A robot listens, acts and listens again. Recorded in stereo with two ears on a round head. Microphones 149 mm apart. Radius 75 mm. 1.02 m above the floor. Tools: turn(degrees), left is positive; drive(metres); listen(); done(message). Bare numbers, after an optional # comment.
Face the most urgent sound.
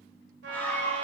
turn(30)
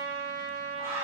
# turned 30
# So it is at 20° right.
turn(-20)
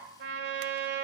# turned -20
listen()
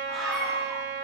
done("Facing the scream, 2 to 4 m away.")